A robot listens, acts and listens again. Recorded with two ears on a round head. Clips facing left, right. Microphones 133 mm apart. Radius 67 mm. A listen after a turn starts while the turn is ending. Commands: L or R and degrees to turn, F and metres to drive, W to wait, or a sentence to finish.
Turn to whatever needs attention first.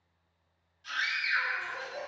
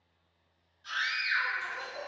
L20
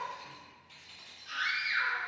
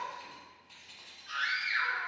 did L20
L140
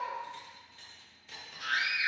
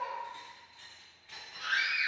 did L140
Facing the scream.